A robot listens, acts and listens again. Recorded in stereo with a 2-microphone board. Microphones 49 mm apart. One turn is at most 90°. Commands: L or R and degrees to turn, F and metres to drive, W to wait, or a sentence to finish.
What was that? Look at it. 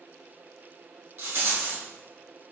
R55
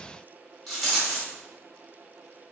Found it: a rattle, straight ahead.